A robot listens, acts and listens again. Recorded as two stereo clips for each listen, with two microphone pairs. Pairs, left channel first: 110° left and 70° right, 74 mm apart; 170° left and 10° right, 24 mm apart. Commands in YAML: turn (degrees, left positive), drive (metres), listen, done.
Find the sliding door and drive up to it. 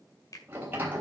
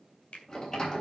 turn: -135
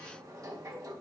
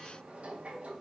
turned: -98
turn: -35
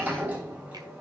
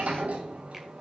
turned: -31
drive: 1.0
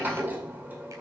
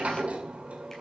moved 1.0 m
turn: -10
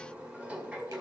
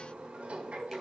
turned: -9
drive: 1.0
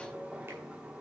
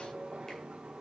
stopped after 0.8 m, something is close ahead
done: "Arrived at the sliding door, straight ahead."